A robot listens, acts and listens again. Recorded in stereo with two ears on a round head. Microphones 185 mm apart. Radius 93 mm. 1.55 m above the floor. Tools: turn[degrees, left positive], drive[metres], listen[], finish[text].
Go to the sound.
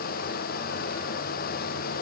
Action: listen[]
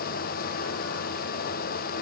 Action: listen[]
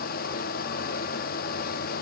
Action: finish[I can't make out anything.]